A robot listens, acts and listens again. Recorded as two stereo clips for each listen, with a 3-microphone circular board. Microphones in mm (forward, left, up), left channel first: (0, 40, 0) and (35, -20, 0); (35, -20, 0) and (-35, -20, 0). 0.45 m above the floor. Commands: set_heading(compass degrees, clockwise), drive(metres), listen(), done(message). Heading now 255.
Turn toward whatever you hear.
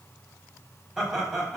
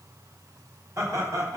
set_heading(45)
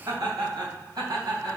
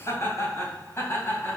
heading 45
set_heading(100)
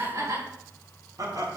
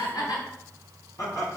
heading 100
set_heading(135)
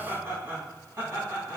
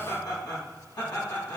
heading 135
done("Found it: laughter, straight ahead.")